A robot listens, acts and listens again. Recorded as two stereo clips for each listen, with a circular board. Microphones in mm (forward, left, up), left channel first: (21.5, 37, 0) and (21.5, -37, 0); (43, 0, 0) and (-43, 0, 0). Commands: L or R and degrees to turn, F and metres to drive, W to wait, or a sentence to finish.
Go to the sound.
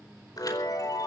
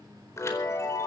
L55
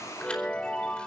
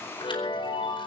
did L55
L15
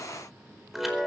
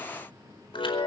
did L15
F1.0
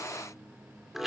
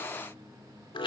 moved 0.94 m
F1.0
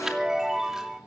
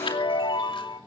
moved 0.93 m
F1.0
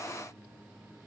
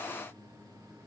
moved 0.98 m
W
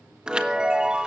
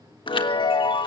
R10
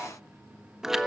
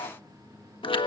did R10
F1.0
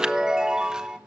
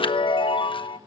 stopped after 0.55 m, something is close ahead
R10
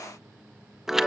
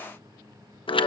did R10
I am next to the chime.